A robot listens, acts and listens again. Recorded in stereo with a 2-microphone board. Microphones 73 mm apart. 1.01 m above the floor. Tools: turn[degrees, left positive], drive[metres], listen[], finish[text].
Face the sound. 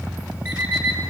Thought: The alarm clock: about 25° right or 155° right.
Action: turn[-25]
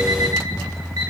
Thought: So it is at 125° right.
Action: turn[-125]
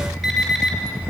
Action: finish[Facing the alarm clock.]